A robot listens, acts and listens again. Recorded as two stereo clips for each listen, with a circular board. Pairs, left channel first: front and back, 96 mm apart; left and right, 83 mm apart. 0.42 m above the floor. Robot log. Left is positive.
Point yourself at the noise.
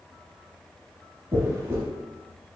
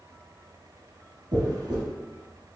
note: The dropped coin: 125° right.
cmd yaw -125
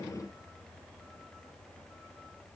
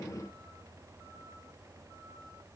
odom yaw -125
end: Facing where the dropped coin came from. I can't hear it now.